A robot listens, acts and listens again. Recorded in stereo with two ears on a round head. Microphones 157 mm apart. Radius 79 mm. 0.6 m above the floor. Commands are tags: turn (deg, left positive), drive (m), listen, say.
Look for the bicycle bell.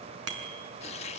<turn deg="-90"/>
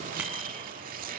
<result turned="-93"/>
<listen/>
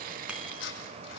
<listen/>
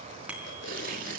<say>Found it: a bicycle bell, straight ahead.</say>